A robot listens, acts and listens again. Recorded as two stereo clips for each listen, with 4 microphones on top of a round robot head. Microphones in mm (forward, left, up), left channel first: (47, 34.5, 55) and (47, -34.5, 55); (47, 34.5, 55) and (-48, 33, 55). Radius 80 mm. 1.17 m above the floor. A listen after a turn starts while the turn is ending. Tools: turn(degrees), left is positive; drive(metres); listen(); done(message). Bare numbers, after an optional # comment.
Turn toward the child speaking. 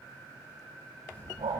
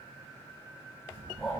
# The child speaking: 155° left.
turn(155)
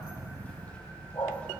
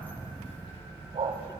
# The child speaking is now 20° left.
turn(20)
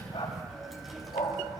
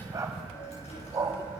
done("Found it: a child speaking, straight ahead, over 4 m away.")